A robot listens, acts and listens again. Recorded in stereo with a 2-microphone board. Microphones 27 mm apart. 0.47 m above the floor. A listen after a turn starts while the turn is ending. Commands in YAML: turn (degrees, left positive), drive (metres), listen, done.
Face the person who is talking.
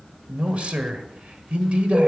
turn: -50
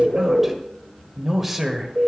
turn: -10
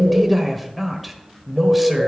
done: "Found it: a man speaking, straight ahead, 1 to 2 m away."